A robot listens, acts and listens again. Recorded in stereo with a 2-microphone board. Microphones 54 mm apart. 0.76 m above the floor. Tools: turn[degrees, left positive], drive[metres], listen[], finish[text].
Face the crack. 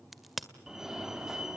Action: turn[30]
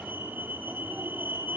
Action: listen[]
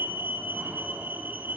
Action: finish[I heard a crack, but can't make it out now. It was about 30° right or 150° left.]